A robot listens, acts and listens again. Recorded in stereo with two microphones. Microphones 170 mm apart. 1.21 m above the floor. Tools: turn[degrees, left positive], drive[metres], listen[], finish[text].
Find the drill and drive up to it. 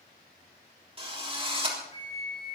Thought: The drill: about 35° right or 145° right.
Action: turn[-35]
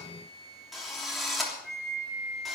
Action: drive[1.0]
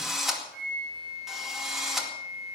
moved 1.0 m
Action: drive[1.0]
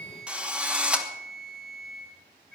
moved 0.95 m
Action: drive[1.0]
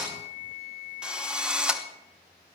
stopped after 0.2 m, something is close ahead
Action: finish[Arrived at the drill, straight ahead.]